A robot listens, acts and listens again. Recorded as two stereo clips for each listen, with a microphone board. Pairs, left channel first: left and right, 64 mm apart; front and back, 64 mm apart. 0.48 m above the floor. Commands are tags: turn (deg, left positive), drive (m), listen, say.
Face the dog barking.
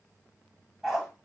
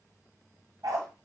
<turn deg="180"/>
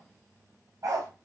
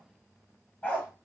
<turn deg="-65"/>
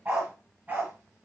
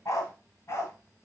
<turn deg="-30"/>
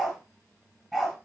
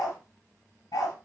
<say>Facing the dog barking.</say>